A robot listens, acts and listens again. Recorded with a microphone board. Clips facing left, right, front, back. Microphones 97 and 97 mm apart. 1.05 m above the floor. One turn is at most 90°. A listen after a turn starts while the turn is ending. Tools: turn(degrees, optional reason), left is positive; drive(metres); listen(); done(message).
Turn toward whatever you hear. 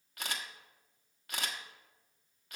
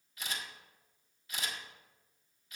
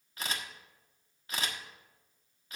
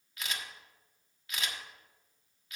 turn(degrees=55, reason="The camera shutter: 55° left.")
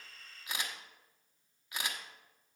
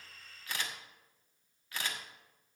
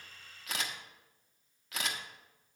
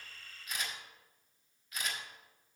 turn(degrees=15, reason="The camera shutter is now 15° left.")
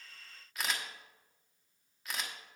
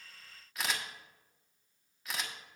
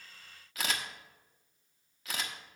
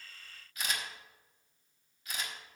done("Found it: a camera shutter, straight ahead.")